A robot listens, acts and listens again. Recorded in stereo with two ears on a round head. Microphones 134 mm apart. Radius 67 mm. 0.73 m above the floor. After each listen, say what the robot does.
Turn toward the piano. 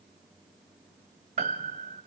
Turn 45° right.
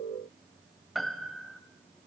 Found it: a piano, straight ahead.